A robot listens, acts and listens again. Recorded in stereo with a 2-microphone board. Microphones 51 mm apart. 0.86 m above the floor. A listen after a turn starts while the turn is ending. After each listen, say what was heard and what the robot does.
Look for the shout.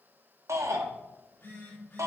The shout: about 70° right or 110° right. Turn 70° right.
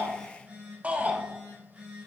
So it is at 30° right. Turn 30° right.
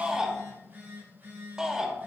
The shout is now 15° right. Turn 15° right.
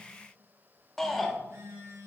Found it: a shout, straight ahead.